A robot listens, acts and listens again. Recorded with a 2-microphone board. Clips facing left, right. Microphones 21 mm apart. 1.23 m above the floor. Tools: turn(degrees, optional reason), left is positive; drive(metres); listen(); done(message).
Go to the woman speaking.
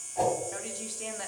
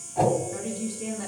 turn(degrees=75, reason="The woman speaking: about 75° left or 105° left.")
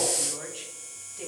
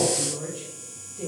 turn(degrees=30, reason="So it is at 30° left.")
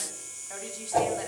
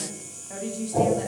turn(degrees=10, reason="The woman speaking is now 10° left.")
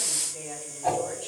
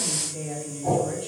drive(metres=1.0)
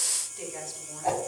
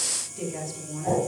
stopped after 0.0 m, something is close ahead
turn(degrees=-10, reason="The woman speaking is now 10° right.")
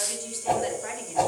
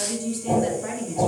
done("Blocked. The woman speaking is further on, straight ahead.")